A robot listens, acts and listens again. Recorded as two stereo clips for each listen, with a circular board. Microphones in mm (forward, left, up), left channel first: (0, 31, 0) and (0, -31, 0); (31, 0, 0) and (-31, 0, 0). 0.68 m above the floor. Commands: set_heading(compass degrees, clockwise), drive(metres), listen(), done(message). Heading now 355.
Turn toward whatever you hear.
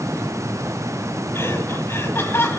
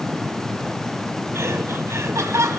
set_heading(215)
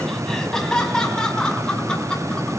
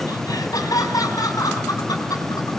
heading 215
set_heading(200)
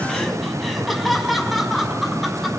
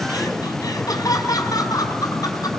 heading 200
done("Facing the laughter, over 4 m away.")